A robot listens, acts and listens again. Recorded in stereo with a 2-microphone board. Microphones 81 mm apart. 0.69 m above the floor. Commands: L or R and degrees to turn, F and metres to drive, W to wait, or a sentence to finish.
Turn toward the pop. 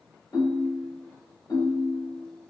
W
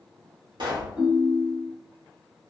R70
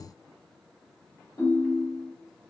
W
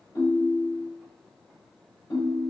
I heard a pop, but can't make it out now. It was about straight ahead or 40° right.